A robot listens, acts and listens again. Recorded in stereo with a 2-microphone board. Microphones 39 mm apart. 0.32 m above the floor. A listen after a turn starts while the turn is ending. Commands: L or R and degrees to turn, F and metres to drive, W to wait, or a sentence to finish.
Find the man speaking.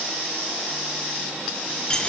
W
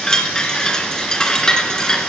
W
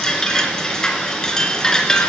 I can't make out a man speaking, only a chime.